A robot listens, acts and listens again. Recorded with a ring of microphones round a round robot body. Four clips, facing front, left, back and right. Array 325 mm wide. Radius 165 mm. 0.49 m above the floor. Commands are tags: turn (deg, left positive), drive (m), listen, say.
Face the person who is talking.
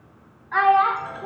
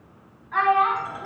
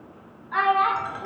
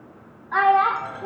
<turn deg="-80"/>
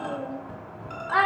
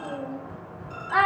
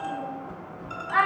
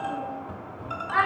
<turn deg="30"/>
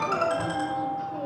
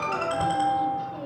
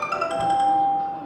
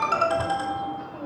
<listen/>
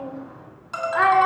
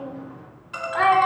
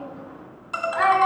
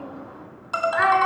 <turn deg="15"/>
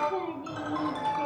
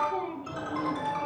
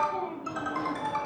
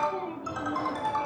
<listen/>
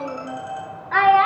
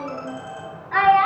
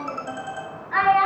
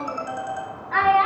<say>Facing the child speaking.</say>